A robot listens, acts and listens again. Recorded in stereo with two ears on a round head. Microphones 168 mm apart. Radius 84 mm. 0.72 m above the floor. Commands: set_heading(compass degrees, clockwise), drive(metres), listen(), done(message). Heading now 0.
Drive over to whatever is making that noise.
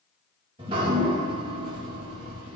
set_heading(30)
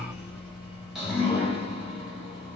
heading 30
drive(1.0)
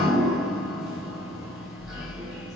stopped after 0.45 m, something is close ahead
done("Something is in my way. I am facing the dripping but have not reached it.")